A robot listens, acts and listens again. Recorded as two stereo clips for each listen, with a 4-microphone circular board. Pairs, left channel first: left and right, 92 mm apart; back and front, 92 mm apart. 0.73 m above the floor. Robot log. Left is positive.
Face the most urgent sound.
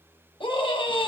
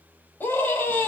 note: The scream: 110° left.
cmd yaw +110
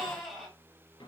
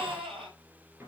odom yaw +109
end: Found it: a scream, straight ahead, over 4 m away.